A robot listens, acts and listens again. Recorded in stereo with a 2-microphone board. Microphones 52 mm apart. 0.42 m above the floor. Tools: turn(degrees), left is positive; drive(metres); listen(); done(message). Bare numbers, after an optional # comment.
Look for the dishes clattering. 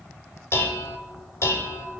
# The dishes clattering: about 60° left or 120° left.
turn(60)
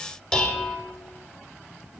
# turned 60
# So it is at 20° left.
turn(20)
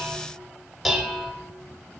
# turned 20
done("Facing the dishes clattering, under 1 m away.")